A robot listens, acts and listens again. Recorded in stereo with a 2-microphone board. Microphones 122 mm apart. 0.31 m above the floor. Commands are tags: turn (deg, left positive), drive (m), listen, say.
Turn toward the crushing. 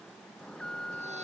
<listen/>
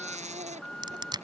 <turn deg="-35"/>
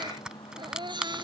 <say>Facing the crushing.</say>